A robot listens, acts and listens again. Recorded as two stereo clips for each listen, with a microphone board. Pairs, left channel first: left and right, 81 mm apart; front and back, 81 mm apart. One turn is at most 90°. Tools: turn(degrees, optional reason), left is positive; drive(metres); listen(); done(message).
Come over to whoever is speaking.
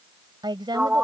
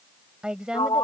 turn(degrees=-90, reason="The woman speaking: 100° right.")
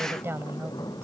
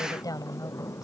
turn(degrees=-35, reason="The woman speaking is now 35° right.")
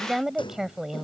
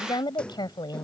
drive(metres=1.0)
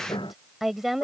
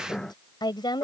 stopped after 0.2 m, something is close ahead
done("Blocked. The woman speaking is further on, straight ahead.")